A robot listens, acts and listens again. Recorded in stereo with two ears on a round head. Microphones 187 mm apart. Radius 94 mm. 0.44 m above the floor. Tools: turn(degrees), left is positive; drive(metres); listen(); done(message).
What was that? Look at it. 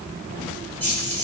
turn(degrees=30)
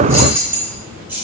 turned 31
turn(degrees=-10)
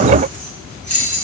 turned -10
turn(degrees=10)
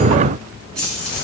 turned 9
done("Facing the keys jangling, 2 to 4 m away.")